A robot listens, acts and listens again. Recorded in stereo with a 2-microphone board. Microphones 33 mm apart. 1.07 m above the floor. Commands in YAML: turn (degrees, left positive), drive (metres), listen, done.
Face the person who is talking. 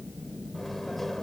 listen: true
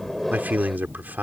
turn: -90
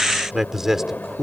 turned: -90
turn: -20
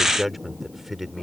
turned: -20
turn: -10
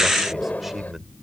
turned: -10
turn: -10
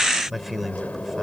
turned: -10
done: "Facing the man speaking."